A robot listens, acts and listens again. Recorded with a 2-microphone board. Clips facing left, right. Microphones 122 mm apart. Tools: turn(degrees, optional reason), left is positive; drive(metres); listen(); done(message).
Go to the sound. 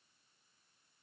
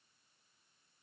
listen()
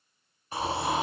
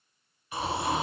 turn(degrees=35, reason="The snoring: about 35° left or 145° left.")
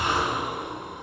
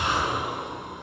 turn(degrees=100, reason="So it is at 100° left.")
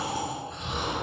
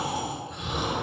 turn(degrees=-15, reason="The snoring is now 15° right.")
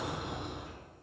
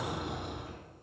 drive(metres=1.0)
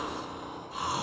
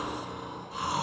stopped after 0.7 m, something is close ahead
done("I am next to the snoring.")